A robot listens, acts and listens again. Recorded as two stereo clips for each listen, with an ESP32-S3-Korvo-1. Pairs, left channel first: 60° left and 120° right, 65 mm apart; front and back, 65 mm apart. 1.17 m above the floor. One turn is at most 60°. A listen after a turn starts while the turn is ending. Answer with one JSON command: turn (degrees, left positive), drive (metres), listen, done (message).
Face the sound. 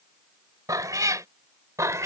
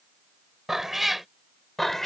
{"turn": -60}
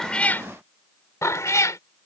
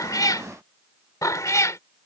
{"turn": 30}
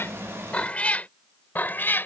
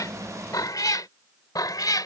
{"done": "Facing the cat meowing."}